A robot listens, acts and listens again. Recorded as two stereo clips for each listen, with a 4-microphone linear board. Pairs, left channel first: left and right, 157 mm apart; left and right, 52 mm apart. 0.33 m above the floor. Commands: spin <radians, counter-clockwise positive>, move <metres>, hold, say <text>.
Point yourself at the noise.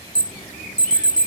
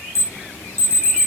spin 1.05
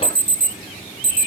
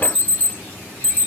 spin 0.70
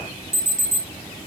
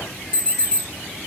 spin 0.26
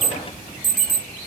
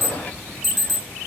say Facing the alarm, 1 to 2 m away.